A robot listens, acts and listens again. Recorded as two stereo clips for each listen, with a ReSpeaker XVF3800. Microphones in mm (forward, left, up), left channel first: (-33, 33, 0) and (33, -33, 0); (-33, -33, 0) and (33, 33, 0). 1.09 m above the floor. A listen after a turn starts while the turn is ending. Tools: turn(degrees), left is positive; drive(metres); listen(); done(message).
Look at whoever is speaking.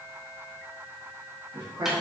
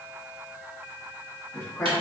turn(degrees=-75)
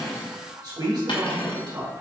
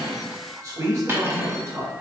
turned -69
turn(degrees=-10)
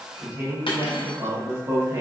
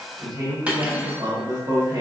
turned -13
done("Facing the man speaking.")